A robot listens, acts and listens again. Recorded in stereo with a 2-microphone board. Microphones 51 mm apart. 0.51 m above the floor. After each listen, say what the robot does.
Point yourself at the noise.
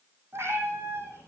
Turn 55° right.
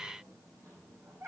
Turn 80° right.
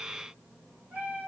Turn 35° right.
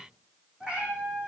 Turn 20° right.
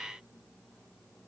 Keep listening.
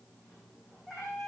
Found it: a cat meowing, straight ahead, 2 to 4 m away.